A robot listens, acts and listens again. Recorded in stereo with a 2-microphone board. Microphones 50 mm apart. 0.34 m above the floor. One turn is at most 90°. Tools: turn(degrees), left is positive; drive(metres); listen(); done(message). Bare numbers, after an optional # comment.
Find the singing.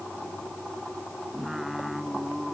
turn(-30)
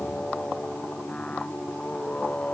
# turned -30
# So it is at 25° left.
turn(25)
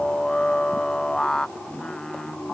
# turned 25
# The singing is now 15° left.
turn(15)
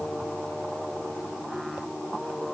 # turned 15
done("Facing the singing.")